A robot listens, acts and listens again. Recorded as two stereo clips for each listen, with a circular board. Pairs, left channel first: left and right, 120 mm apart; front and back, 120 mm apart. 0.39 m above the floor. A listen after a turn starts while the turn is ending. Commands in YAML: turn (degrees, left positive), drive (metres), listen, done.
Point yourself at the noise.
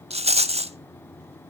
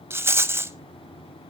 turn: -110
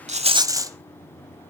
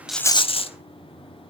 turn: -30
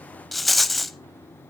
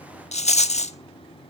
done: "Facing the rattle."